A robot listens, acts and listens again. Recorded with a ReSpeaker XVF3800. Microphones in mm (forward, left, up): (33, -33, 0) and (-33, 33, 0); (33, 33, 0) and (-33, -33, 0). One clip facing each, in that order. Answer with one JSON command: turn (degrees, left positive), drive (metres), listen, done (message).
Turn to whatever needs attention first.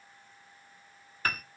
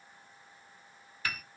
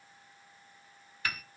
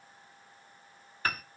{"listen": true}
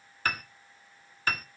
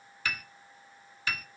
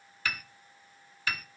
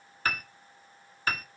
{"listen": true}
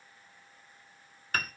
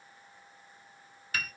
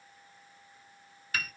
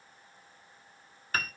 {"done": "I can't make out anything urgent, only a piano."}